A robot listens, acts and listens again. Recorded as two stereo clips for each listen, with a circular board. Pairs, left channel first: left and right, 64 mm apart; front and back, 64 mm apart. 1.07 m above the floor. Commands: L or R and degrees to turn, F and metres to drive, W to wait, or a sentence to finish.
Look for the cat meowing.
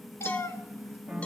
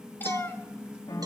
L45
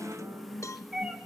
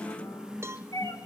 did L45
R10
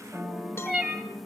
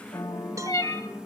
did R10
R10
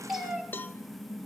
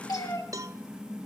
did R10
Found it: a cat meowing, straight ahead.